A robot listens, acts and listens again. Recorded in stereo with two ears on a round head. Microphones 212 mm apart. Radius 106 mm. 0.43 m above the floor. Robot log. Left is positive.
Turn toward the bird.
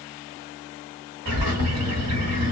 note: The bird: about 65° right or 115° right.
cmd yaw -65
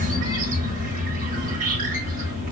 note: So it is at 40° right.
cmd yaw -40
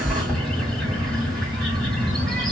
end: Facing the bird, 1 to 2 m away.